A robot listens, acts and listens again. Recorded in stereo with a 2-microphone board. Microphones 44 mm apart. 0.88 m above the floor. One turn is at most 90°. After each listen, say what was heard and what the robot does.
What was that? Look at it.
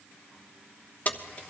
The keys jangling: about 35° left or 145° left. Turn 35° left.
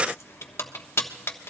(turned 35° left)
So it is at 105° left. Turn 90° left.
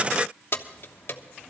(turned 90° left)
The keys jangling is now 55° left. Turn 55° left.
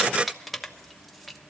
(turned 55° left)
Facing the keys jangling, 1 to 2 m away.